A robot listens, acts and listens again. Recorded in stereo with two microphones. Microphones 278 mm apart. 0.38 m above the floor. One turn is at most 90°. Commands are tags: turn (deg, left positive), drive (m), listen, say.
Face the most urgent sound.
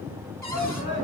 <turn deg="40"/>
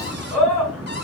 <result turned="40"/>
<say>Found it: a shout, straight ahead.</say>